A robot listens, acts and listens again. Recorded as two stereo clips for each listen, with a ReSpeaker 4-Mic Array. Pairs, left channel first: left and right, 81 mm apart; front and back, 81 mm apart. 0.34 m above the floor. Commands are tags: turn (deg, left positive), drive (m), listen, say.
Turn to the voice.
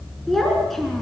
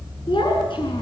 <say>Facing the child speaking.</say>